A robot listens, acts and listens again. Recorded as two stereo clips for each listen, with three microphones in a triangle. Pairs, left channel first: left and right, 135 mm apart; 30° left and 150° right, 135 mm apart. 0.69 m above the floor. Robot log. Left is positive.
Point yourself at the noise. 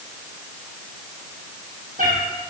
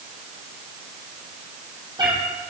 note: The cat meowing: 95° right.
cmd yaw -95
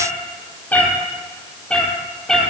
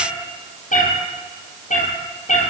end: Facing the cat meowing, 2 to 4 m away.